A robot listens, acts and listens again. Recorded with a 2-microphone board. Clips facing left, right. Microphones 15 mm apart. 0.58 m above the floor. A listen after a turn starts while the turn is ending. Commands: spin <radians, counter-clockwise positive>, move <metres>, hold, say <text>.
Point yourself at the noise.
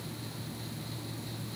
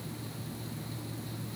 hold
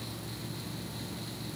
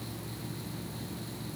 hold
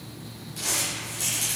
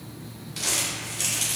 spin -0.96
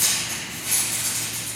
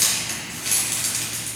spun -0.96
spin -1.13
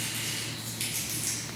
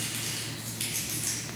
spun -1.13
say Found it: crumpling, straight ahead.